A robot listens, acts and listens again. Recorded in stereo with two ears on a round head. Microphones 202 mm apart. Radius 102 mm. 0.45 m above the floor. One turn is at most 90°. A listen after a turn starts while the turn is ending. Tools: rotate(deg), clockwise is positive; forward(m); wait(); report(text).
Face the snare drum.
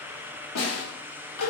rotate(-70)
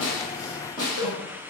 rotate(-20)
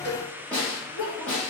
report("Found it: a snare drum, straight ahead.")